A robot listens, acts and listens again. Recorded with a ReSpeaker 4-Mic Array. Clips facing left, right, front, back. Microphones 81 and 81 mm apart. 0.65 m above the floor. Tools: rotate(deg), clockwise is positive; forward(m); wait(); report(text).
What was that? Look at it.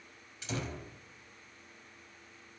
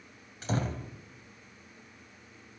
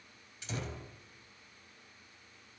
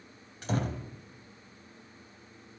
rotate(135)
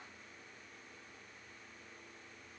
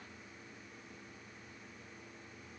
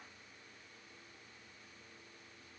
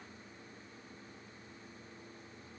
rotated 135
report("Facing where the door slam came from. I can't hear it now.")